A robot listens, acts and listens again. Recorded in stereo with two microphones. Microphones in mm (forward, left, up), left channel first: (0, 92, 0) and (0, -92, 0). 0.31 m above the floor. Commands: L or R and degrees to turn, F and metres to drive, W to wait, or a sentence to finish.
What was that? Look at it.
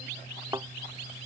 R20
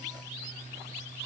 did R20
W
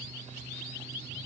I heard a thud, but can't make it out now. It was about straight ahead or 140° right.